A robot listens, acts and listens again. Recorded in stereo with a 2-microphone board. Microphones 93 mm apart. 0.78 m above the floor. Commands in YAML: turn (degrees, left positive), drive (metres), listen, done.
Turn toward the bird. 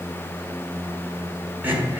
listen: true
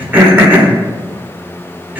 listen: true
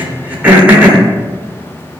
done: "I can't make out a bird, only throat clearing."